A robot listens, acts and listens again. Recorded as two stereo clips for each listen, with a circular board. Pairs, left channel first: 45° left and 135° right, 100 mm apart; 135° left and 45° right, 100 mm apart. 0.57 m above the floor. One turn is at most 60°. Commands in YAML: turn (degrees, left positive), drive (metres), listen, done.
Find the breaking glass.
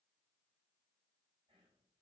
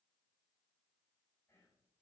listen: true
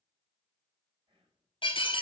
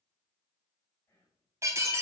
turn: 15
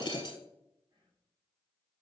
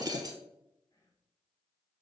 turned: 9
done: "Facing the breaking glass, 1 to 2 m away."